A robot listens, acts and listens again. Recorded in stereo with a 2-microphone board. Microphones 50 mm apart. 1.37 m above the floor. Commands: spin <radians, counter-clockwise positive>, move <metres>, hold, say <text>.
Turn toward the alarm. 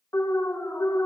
spin 1.57
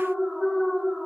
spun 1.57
say Facing the alarm.